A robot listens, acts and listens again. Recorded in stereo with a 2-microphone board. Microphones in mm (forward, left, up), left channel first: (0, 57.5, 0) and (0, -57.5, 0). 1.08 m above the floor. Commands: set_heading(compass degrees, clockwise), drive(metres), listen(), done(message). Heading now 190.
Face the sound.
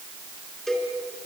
set_heading(160)
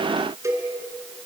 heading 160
set_heading(185)
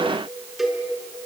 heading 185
done("Found it: a cowbell, straight ahead.")